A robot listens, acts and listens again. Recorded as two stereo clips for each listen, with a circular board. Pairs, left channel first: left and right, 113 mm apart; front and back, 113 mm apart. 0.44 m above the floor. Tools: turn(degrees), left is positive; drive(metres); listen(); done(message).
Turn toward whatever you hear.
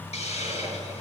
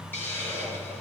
turn(degrees=70)
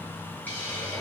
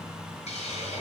turn(degrees=15)
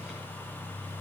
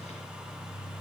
listen()
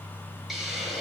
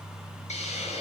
done("Found it: a hiss, straight ahead.")